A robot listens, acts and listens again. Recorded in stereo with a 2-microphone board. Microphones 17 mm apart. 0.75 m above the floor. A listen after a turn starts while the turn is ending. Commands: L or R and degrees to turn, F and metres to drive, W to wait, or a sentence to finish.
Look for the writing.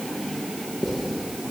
R20
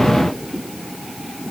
W
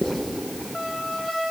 Facing the writing.